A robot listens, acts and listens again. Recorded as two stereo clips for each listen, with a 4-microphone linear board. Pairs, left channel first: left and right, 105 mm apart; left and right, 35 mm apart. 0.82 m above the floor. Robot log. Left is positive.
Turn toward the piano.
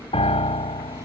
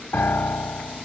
note: The piano: about 60° left or 120° left.
cmd yaw +60
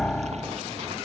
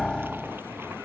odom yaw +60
end: Found it: a piano, straight ahead.